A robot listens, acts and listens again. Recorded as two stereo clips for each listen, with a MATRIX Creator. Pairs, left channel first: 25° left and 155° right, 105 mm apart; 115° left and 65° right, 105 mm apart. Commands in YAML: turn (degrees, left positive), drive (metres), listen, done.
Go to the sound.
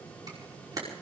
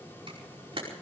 turn: -105
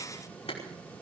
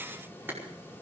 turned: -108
drive: 1.0
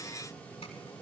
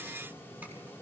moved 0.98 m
listen: true
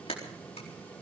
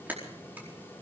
drive: 1.0
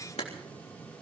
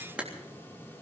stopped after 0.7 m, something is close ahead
turn: 10
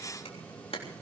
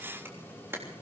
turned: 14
done: "Something is in my way. I am facing the camera shutter but have not reached it."